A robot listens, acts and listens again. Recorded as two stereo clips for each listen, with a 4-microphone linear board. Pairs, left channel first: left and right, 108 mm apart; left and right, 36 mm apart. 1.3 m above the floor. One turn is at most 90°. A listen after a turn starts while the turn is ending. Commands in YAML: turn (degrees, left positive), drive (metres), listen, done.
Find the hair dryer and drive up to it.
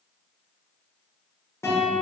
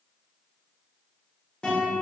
listen: true
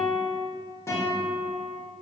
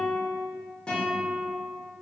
listen: true
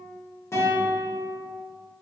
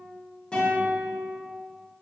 done: "I can't make out a hair dryer, only a guitar."